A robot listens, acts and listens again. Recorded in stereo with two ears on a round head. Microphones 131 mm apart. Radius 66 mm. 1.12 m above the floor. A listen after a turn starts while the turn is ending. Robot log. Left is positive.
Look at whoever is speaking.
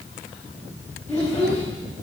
cmd yaw +30
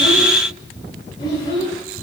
note: So it is at 145° left.
cmd yaw +145
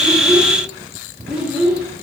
end: Facing the child speaking, 1 to 2 m away.